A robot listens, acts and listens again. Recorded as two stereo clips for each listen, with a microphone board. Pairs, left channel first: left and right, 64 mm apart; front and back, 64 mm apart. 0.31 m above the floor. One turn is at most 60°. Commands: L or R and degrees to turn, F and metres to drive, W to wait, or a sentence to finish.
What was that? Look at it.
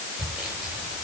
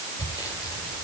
R15
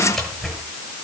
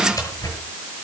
Found it: sawing, straight ahead.